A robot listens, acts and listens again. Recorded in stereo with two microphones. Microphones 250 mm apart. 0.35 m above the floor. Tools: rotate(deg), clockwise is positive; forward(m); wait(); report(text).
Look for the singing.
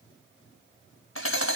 wait()
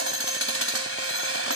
wait()
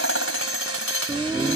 rotate(20)
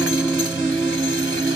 rotate(20)
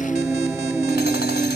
rotate(30)
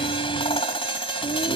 rotate(-20)
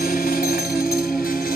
report("Facing the singing.")